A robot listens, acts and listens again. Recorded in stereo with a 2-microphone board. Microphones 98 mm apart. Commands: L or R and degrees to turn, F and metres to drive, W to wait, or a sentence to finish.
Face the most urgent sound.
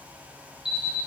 R30
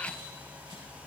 W
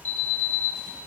L20
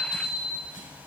Facing the alarm.